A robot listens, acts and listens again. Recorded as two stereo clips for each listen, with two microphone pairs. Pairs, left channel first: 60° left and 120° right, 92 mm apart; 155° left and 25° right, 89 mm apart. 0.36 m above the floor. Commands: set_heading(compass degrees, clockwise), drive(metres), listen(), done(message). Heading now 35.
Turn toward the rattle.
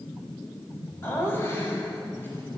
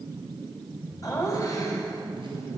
listen()
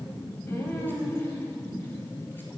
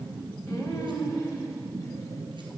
listen()
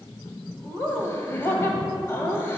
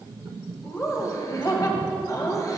done("I can't make out a rattle, only laughter.")